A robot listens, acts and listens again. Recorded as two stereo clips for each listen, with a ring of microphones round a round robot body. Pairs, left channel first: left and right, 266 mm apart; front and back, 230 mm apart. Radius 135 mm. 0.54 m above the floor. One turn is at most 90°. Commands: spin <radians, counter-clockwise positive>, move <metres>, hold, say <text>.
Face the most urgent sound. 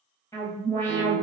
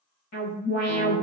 spin 0.17
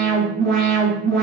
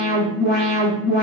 say Facing the alarm, 1 to 2 m away.